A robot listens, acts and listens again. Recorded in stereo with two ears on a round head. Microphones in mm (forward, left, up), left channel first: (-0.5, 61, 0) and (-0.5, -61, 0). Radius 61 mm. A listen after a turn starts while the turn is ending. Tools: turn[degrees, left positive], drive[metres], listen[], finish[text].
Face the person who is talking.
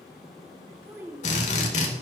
Thought: The child speaking: about 15° right or 165° right.
Action: turn[-15]
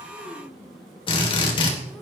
Action: listen[]
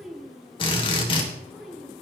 Action: finish[Facing the child speaking.]